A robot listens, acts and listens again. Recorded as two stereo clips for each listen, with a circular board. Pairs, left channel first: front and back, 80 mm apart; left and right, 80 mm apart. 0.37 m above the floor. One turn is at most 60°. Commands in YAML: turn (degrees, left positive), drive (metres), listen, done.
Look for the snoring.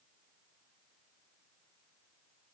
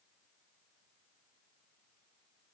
listen: true
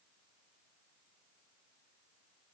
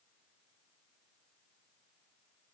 listen: true
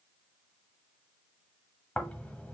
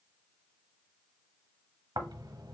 turn: -60
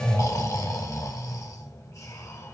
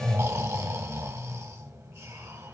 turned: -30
turn: -45
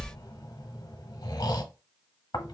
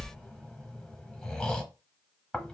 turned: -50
turn: 10
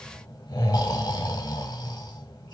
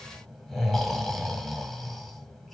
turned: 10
done: "Facing the snoring."